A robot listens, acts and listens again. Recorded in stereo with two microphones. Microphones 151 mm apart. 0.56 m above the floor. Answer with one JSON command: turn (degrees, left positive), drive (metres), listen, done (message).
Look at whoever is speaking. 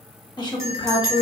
{"turn": 30}
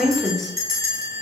{"done": "Found it: a woman speaking, straight ahead, 1 to 2 m away."}